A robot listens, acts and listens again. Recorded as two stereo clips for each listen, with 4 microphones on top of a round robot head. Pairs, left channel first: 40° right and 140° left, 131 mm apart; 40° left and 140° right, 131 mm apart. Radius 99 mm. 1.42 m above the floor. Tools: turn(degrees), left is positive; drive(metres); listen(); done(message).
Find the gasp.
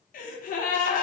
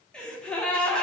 turn(degrees=-45)
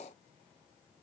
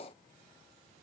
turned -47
done("I heard a gasp from this way, but can't make it out now.")